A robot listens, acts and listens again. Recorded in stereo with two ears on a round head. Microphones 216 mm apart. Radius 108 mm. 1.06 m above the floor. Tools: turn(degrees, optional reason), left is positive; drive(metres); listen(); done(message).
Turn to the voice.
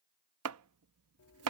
listen()
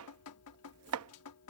listen()
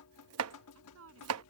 turn(degrees=-60, reason="The woman speaking: about 60° right or 120° right.")
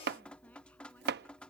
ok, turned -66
listen()
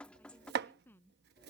turn(degrees=10, reason="So it is at 10° left.")
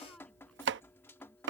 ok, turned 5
listen()
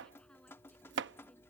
listen()
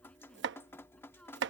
done("I heard a woman speaking from this way, but can't make it out now.")